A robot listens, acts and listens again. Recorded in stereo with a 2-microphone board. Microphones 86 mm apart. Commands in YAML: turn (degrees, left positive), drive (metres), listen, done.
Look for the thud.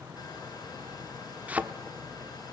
turn: -15
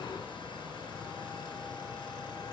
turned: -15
listen: true
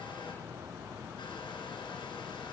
done: "I heard a thud, but can't make it out now. It was about straight ahead or 150° right."